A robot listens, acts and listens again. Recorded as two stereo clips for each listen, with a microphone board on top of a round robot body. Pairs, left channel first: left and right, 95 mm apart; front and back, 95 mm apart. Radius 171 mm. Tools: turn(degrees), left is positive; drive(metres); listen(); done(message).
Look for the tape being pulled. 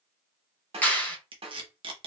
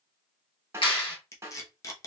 turn(degrees=-55)
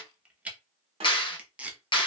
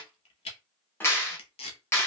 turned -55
turn(degrees=-15)
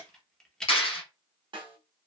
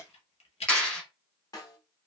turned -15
done("Facing the tape being pulled, under 1 m away.")